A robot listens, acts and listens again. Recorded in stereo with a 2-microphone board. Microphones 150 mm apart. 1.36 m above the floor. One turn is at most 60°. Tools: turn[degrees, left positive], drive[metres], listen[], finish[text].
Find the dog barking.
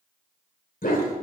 Thought: The dog barking: about 70° left or 110° left.
Action: turn[60]
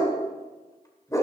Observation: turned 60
Thought: So it is at 25° left.
Action: turn[25]
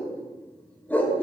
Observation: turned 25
Thought: The dog barking is now 10° left.
Action: turn[10]
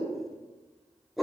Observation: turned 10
Action: finish[Found it: a dog barking, straight ahead, 2 to 4 m away.]